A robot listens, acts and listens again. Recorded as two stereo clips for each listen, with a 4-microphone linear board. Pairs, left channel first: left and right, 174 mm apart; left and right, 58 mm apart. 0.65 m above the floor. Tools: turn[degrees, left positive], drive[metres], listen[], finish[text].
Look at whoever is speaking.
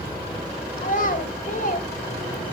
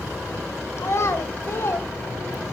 Thought: The child speaking: about 50° left or 130° left.
Action: turn[50]
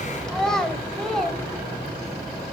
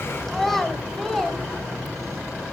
Action: finish[Found it: a child speaking, straight ahead, 2 to 4 m away.]